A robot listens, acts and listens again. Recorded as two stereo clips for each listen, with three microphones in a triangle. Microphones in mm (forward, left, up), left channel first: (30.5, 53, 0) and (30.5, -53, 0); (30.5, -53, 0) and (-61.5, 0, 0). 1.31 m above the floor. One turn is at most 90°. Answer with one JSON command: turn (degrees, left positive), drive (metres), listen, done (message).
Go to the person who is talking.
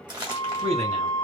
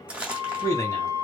{"turn": -90}
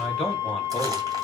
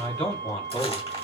{"drive": 1.0}
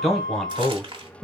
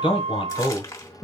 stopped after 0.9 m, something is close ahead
{"done": "Arrived at the man speaking, straight ahead."}